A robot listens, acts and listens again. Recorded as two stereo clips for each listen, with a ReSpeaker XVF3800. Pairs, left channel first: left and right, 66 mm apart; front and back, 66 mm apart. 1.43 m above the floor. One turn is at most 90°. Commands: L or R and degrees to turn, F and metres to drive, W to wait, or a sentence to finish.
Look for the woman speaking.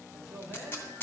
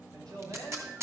R90
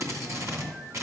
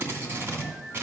R75
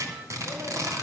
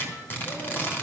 W
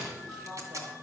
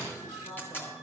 I heard a woman speaking from this way, but can't make it out now.